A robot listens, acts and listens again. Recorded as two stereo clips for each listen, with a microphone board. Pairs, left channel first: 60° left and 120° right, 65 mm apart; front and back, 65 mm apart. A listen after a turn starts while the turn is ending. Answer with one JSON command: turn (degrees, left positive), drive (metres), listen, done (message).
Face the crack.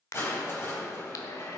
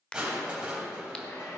{"turn": 70}
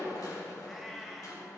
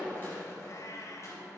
{"done": "Facing where the crack came from. I can't hear it now."}